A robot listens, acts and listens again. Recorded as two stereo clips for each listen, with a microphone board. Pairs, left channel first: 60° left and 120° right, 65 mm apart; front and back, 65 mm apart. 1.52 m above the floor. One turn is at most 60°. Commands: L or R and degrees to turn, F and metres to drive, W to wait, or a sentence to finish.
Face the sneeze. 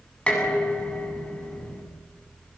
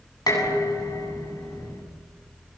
W
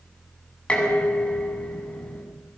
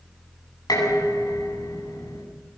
W
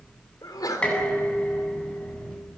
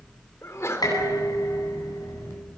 L45
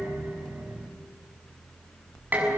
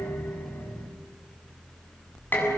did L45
Facing where the sneeze came from. I can't hear it now.